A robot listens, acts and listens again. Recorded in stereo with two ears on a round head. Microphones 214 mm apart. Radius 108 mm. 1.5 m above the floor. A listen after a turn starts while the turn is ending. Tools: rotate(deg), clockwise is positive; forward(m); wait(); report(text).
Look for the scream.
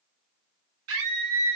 rotate(70)
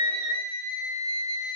rotate(35)
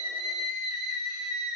report("Facing the scream.")